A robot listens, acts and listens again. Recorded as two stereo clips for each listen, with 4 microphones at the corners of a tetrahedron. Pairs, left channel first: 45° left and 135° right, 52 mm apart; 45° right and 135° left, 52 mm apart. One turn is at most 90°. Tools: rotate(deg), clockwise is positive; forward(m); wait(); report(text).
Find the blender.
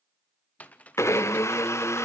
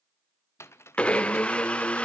rotate(-20)
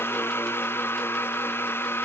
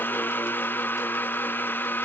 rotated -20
report("Facing the blender, 1 to 2 m away.")